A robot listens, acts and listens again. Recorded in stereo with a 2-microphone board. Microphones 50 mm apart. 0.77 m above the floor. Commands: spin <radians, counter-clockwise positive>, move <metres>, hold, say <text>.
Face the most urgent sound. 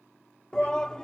spin 0.52
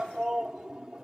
spin -0.26
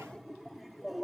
say Found it: a shout, straight ahead.